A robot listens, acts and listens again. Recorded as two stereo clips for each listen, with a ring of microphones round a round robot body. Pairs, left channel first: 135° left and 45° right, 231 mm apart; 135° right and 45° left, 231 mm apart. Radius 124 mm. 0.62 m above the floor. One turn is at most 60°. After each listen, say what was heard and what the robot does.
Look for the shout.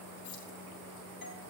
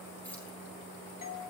Keep listening.
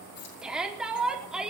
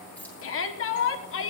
The shout: 130° right. Turn 60° right.
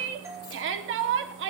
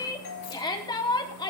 The shout is now 65° right. Turn 60° right.
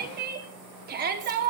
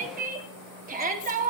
Facing the shout.